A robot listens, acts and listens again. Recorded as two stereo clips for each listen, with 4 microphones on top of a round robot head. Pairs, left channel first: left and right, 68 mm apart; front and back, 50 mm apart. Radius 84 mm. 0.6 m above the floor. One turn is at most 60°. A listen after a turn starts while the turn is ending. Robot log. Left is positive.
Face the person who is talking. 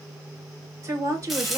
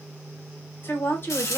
note: The woman speaking: 45° right.
cmd yaw -45
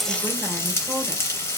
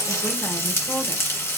cmd idle
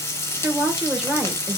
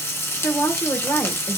note: The woman speaking is now 10° right.
cmd yaw -10
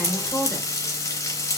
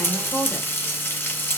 end: Found it: a woman speaking, straight ahead.